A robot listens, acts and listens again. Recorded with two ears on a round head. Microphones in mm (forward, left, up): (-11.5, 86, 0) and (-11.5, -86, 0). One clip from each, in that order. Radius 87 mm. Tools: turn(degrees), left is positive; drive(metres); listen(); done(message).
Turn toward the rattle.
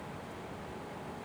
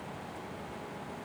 listen()
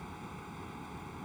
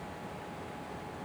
listen()
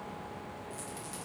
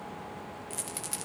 turn(degrees=-40)
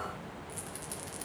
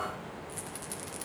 listen()
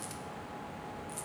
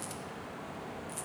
listen()
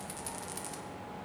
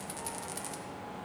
done("I heard a rattle, but can't make it out now. It was about straight ahead or 100° right.")